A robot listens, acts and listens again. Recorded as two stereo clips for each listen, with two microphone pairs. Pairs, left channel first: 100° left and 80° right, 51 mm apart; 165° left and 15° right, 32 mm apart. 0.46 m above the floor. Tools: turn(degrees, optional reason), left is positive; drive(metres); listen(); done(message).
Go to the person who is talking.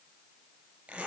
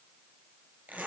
listen()
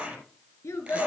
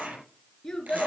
turn(degrees=95, reason="The child speaking: 95° left.")
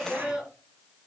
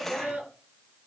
drive(metres=1.0)
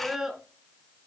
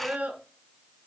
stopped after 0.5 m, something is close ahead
done("Blocked. The child speaking is further on, straight ahead.")